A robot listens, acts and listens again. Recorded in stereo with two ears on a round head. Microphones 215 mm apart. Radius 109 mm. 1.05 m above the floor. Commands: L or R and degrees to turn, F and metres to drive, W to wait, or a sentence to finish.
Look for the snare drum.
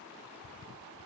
W
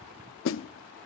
L55
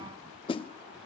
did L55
L25
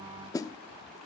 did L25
L15
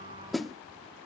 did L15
Facing the snare drum.